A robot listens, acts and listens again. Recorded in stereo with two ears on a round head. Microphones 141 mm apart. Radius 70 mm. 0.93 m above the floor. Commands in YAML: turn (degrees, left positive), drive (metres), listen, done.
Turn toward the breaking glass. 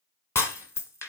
turn: 15
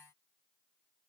listen: true
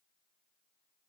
done: "I heard breaking glass, but can't make it out now. It was about straight ahead or 150° left."